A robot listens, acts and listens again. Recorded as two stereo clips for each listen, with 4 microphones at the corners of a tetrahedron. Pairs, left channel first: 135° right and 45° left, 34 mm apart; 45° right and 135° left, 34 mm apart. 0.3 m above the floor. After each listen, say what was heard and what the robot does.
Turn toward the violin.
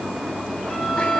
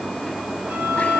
The violin: 150° left. Turn 150° left.
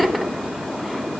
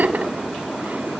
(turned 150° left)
Keep listening.
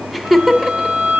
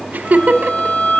The violin is now 10° left. Turn 10° left.
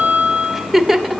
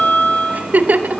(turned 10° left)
Found it: a violin, straight ahead, 2 to 4 m away.